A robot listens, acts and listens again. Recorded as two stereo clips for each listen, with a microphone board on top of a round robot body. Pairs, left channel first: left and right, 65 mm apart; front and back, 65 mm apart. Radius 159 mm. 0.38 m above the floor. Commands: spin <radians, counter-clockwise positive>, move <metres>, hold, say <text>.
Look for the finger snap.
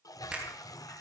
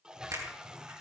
spin -2.79
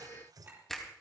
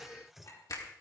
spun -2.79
say Facing the finger snap, 2 to 4 m away.